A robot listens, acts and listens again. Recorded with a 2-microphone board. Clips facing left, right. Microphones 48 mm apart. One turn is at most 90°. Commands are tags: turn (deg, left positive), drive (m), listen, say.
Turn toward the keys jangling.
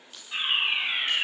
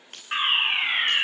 <turn deg="-50"/>
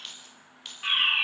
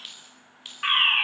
<turn deg="-10"/>
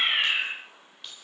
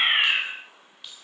<say>Found it: keys jangling, straight ahead.</say>